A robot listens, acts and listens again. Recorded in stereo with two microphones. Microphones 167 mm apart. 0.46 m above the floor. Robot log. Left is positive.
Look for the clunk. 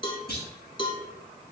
cmd yaw +90
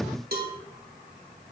end: I heard a clunk from this way, but can't make it out now.